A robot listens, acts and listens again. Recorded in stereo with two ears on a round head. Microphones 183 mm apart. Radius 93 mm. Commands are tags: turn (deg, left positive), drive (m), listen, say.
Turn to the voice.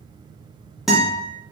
<listen/>
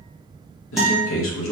<turn deg="70"/>
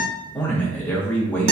<turn deg="10"/>
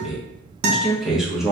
<say>Facing the man speaking, under 1 m away.</say>